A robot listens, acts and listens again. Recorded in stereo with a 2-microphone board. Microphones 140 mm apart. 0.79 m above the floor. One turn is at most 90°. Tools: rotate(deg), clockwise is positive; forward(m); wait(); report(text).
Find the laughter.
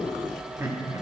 rotate(25)
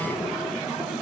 wait()
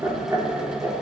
rotate(20)
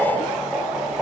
rotate(30)
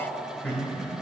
rotate(-10)
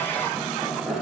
report("Found it: laughter, straight ahead.")